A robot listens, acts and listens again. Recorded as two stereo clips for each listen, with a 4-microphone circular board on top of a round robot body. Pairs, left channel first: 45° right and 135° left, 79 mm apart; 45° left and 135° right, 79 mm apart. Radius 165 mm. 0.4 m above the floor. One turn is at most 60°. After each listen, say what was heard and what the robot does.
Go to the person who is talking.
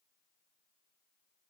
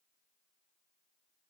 Keep listening.
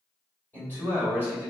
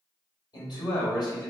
The man speaking: 20° left. Turn 20° left.
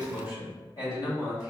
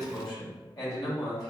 Drive 1.0 m forward.
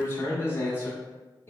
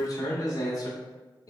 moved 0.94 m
The man speaking is now 10° left. Turn 10° left.
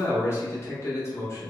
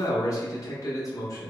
Drive 1.0 m forward.
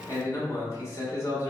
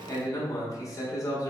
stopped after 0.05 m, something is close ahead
I am next to the man speaking.